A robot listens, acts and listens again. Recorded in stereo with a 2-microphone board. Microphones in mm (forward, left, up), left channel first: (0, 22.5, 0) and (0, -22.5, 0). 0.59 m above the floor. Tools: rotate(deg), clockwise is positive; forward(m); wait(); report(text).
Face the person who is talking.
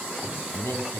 rotate(-90)
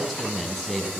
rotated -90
report("Found it: a man speaking, straight ahead, over 4 m away.")